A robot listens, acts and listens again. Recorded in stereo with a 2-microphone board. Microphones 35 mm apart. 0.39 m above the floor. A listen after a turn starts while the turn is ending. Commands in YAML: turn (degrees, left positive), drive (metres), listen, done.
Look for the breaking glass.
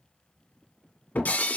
turn: 65
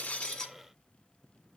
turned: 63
listen: true
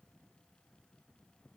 done: "I heard breaking glass, but can't make it out now. It was about straight ahead or 55° left."